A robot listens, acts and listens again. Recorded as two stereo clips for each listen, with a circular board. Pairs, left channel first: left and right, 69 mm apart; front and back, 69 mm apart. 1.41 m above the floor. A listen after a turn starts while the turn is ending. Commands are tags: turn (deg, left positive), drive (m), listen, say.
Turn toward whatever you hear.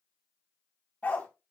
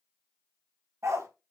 <turn deg="155"/>
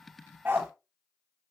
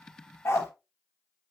<turn deg="-35"/>
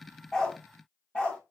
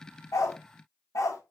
<turn deg="20"/>
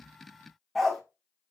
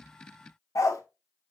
<say>Found it: a dog barking, straight ahead, 1 to 2 m away.</say>